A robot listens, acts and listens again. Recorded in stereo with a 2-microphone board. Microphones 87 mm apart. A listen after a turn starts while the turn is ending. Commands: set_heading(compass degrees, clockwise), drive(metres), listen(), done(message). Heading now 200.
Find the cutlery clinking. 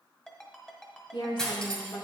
set_heading(170)
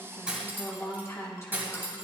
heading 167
set_heading(192)
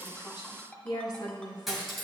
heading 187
done("Facing the cutlery clinking, 1 to 2 m away.")